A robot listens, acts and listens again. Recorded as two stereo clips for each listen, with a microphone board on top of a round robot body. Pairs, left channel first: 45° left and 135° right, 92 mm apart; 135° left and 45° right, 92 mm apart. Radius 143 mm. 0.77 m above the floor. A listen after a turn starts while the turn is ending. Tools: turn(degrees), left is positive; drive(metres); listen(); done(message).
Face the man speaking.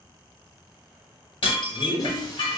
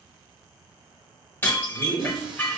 turn(degrees=-60)
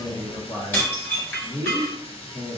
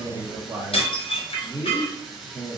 turn(degrees=30)
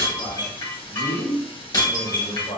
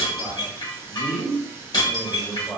turn(degrees=30)
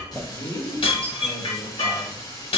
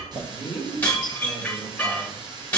done("Found it: a man speaking, straight ahead.")